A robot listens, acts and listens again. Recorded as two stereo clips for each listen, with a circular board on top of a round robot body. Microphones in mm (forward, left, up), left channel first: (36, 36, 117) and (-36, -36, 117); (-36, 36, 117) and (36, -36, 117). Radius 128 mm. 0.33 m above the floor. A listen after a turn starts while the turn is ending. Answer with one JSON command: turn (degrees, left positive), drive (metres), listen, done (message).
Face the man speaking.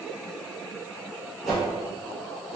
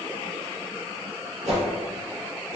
{"listen": true}
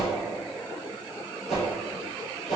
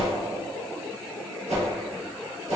{"listen": true}
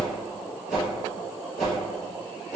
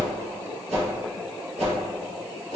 {"done": "I can't make out a man speaking, only a whoosh."}